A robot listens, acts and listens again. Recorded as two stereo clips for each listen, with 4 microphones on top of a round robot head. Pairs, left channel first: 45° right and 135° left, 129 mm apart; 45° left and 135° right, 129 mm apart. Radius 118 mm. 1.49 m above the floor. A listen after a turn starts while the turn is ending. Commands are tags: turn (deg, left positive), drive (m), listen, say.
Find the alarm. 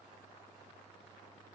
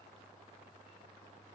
<listen/>
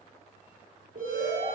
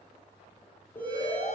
<turn deg="120"/>
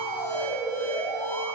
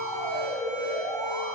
<say>Facing the alarm, over 4 m away.</say>